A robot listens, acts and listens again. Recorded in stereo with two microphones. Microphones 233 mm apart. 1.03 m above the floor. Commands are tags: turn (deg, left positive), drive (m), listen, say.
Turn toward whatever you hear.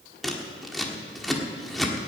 <turn deg="30"/>
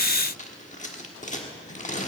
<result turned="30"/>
<turn deg="150"/>
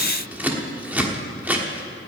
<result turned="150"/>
<say>Found it: scissors, straight ahead.</say>